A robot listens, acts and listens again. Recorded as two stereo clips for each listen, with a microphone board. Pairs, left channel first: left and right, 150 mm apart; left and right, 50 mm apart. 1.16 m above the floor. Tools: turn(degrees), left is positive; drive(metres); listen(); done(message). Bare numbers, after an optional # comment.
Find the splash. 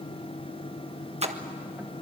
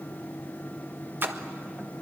# The splash: about 45° right or 135° right.
turn(-45)
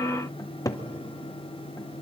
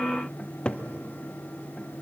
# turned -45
listen()
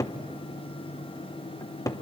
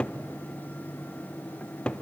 done("I heard a splash, but can't make it out now. It was about straight ahead or 90° right.")